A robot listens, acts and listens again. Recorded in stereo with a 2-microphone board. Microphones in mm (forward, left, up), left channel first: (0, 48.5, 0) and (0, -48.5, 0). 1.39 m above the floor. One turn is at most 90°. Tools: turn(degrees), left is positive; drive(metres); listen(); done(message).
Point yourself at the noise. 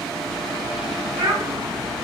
turn(degrees=-50)
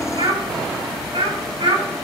turn(degrees=-70)
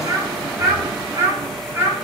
turn(degrees=-25)
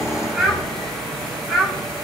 done("Found it: a child speaking, straight ahead.")